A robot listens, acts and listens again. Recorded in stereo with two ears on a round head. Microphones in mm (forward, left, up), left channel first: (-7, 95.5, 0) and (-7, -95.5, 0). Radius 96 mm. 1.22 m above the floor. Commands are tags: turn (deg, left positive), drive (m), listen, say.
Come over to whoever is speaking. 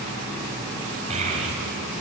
<turn deg="-35"/>
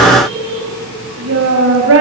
<turn deg="-110"/>
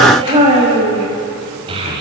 <turn deg="-25"/>
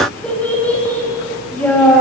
<drive m="1.0"/>
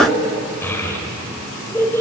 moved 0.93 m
<turn deg="10"/>
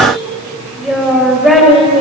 <drive m="1.0"/>
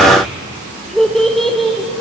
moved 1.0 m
<drive m="1.0"/>
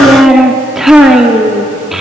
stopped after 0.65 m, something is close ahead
<say>Arrived at the child speaking, straight ahead.</say>